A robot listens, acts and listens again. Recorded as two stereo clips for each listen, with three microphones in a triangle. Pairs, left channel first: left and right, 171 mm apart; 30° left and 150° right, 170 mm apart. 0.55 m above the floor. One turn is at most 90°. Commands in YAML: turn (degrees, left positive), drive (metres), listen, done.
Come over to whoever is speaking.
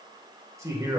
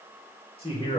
turn: -20
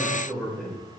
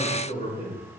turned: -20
drive: 1.0
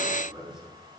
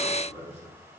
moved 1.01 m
drive: 1.0
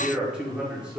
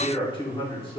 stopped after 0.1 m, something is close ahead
turn: -10
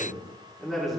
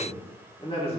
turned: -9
done: "I am next to the man speaking."